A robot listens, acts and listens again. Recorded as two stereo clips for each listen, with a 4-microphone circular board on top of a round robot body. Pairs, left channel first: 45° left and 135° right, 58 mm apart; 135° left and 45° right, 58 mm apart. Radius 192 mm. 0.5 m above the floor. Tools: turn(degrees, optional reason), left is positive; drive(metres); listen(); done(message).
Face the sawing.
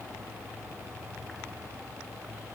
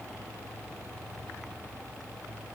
listen()
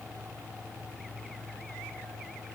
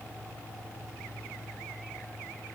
listen()
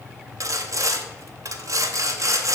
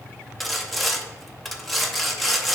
turn(degrees=-135, reason="The sawing: 135° right.")
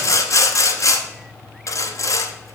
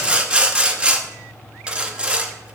turn(degrees=25, reason="The sawing is now 25° left.")
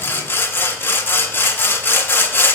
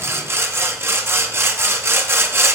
done("Facing the sawing, 1 to 2 m away.")